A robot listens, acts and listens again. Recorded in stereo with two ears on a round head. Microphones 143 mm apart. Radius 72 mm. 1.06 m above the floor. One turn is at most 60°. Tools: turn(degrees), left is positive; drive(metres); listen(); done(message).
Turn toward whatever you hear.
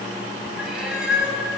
turn(degrees=-30)
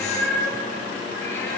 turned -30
turn(degrees=20)
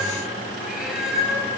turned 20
done("Facing the cat meowing.")